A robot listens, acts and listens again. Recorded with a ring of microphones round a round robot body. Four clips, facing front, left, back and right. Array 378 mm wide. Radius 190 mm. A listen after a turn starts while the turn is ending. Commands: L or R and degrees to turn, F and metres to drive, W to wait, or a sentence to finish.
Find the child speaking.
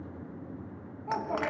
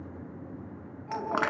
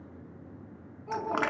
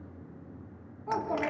R60
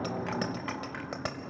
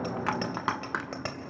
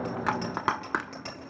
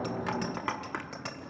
W
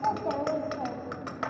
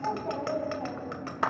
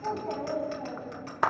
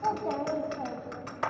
R10
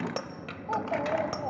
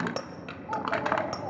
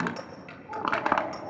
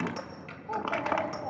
L10
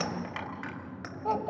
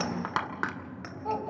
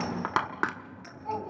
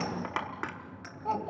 Found it: a child speaking, straight ahead.